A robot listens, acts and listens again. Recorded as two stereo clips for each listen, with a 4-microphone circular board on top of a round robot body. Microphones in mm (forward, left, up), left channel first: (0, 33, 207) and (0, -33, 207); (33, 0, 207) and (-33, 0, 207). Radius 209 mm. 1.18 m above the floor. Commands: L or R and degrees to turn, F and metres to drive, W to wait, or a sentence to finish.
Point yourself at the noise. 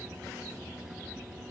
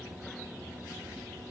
W
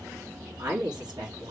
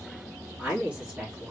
R105
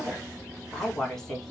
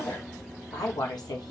Found it: a woman speaking, straight ahead, 1 to 2 m away.